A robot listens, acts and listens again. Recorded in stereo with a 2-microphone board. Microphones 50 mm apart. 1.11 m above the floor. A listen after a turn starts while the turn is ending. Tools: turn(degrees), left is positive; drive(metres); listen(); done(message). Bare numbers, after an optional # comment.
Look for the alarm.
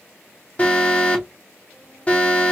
# The alarm: about 25° left or 155° left.
turn(25)
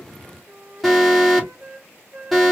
done("Facing the alarm, 2 to 4 m away.")